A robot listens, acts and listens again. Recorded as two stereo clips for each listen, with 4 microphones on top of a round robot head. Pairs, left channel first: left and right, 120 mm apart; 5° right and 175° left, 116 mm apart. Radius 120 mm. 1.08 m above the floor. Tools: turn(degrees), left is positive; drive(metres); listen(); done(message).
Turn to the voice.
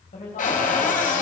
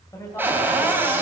turn(degrees=55)
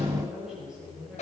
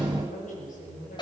done("Facing the woman speaking.")